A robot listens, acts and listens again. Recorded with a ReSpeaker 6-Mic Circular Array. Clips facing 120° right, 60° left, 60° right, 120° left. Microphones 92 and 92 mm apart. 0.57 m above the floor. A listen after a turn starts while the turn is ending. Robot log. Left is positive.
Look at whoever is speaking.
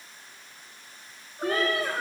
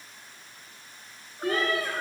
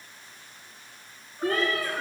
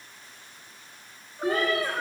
note: The child speaking: 65° right.
cmd yaw -65
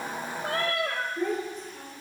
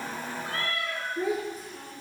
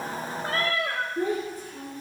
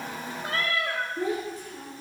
note: The child speaking is now 25° right.
cmd yaw -25
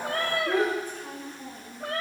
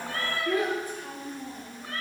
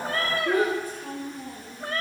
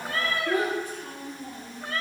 note: The child speaking is now 20° right.
cmd yaw -20
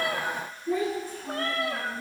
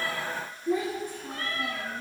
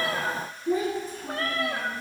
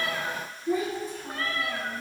note: The child speaking is now 10° right.
cmd yaw -10
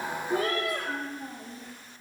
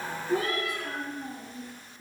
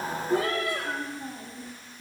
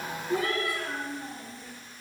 end: Facing the child speaking, over 4 m away.